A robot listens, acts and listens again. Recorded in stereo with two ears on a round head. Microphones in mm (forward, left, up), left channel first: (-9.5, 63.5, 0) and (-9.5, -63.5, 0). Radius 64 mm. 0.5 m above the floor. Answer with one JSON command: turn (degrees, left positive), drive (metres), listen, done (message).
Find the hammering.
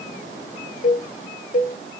{"listen": true}
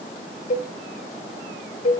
{"listen": true}
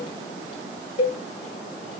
{"done": "I can't make out hammering, only a cowbell."}